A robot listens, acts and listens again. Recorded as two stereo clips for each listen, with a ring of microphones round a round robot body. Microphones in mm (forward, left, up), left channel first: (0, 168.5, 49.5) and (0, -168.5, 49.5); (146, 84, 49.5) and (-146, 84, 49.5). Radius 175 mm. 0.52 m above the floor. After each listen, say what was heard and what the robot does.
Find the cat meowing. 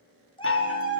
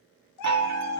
The cat meowing: 15° left. Turn 15° left.
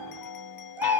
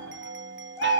Keep listening.
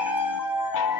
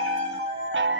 Found it: a cat meowing, straight ahead, over 4 m away.